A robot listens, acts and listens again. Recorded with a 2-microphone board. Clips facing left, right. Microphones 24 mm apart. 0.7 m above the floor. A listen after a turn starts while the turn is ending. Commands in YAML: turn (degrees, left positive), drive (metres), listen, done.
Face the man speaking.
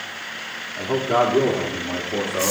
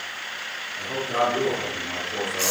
turn: 35
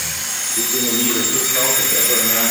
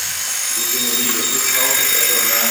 listen: true
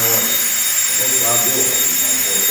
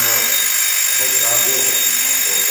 listen: true
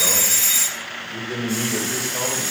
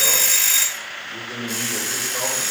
turn: -15
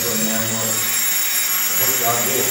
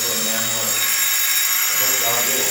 done: "Found it: a man speaking, straight ahead."